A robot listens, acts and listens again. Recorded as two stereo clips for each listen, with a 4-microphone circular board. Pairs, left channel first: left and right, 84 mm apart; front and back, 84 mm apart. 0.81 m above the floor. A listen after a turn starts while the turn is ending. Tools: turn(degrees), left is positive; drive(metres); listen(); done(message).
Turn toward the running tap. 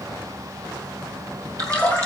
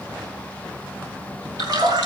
turn(degrees=-140)
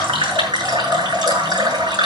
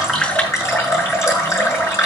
turn(degrees=-55)
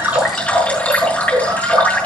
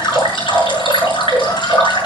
turn(degrees=20)
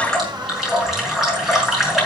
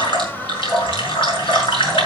done("Facing the running tap, over 4 m away.")